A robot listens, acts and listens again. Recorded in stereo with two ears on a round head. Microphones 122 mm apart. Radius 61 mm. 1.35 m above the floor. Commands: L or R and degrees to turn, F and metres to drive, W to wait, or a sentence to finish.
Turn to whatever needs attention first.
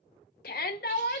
L75
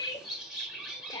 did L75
L30
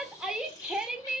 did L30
Facing the shout, 1 to 2 m away.